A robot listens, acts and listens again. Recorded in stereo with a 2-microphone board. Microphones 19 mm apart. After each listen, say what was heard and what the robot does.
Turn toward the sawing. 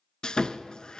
The sawing: about 50° left or 130° left. Turn 50° left.
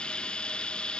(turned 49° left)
So it is at 80° left. Turn 80° left.
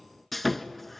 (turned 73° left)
Found it: sawing, straight ahead.